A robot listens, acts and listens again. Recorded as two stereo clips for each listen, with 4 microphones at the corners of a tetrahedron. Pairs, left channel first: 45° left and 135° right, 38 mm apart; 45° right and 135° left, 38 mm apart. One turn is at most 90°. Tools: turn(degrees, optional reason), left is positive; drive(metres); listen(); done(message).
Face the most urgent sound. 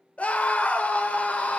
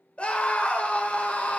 done("Facing the scream.")